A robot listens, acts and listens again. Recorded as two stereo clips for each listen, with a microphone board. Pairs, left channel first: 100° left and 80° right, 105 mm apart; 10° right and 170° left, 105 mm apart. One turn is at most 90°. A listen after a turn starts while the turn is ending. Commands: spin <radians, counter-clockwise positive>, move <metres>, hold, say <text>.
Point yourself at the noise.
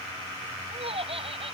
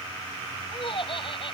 spin -0.87
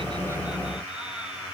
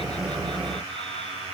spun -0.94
hold
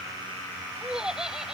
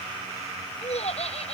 say Found it: laughter, straight ahead.